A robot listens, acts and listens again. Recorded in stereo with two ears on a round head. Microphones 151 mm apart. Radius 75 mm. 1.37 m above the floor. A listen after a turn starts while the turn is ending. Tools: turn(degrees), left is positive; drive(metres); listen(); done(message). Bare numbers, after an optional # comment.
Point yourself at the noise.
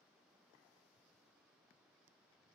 listen()
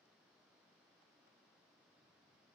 listen()
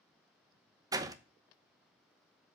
# The door slam: about 20° right or 160° right.
turn(-20)
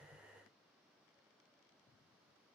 listen()
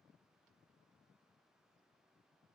done("I heard a door slam, but can't make it out now. It was about straight ahead or 140° right.")